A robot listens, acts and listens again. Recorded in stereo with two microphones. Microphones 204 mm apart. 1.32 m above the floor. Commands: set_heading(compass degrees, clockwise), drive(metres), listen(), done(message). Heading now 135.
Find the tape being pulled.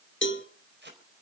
set_heading(195)
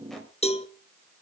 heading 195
listen()
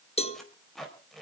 done("Found it: tape being pulled, straight ahead.")